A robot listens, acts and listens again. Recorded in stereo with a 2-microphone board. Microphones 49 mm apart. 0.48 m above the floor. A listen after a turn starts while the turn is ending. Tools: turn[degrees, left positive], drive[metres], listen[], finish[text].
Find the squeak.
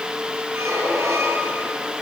Thought: The squeak: about 70° right or 110° right.
Action: turn[-70]
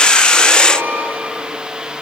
Thought: So it is at 40° right.
Action: turn[-40]
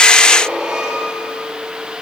Thought: The squeak is now 15° right.
Action: turn[-15]
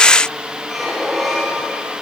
Action: finish[Found it: a squeak, straight ahead.]